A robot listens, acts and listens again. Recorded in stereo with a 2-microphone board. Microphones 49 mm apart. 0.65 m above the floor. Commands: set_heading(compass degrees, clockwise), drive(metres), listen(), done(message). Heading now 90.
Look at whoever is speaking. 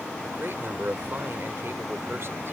set_heading(150)
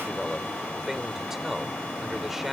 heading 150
set_heading(160)
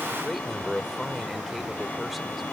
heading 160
done("Facing the man speaking.")